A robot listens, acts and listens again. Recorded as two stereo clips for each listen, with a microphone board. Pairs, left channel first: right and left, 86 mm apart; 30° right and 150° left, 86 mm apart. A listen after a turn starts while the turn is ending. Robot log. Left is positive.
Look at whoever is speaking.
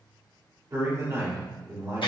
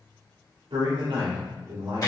note: The man speaking: 140° left.
cmd yaw +140
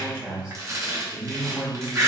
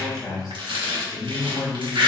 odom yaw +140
end: Facing the man speaking, 1 to 2 m away.